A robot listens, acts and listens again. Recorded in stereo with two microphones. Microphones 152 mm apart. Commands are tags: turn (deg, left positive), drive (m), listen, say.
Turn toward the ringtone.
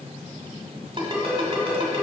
<turn deg="-35"/>
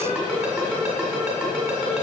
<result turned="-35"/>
<say>Found it: a ringtone, straight ahead.</say>